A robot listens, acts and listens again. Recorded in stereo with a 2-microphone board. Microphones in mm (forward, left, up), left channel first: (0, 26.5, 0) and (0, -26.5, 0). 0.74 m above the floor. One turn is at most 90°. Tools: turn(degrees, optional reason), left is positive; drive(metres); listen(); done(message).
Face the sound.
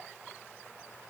listen()
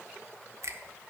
turn(degrees=-70, reason="The finger snap: about 70° right or 110° right.")
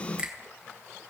turn(degrees=-20, reason="So it is at 20° right.")
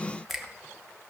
done("Facing the finger snap.")